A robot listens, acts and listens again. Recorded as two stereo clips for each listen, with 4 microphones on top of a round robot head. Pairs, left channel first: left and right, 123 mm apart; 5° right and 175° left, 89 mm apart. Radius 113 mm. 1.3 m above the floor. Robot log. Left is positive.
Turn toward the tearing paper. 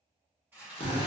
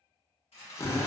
note: The tearing paper: 15° right.
cmd yaw -15
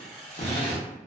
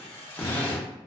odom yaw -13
end: Facing the tearing paper, 1 to 2 m away.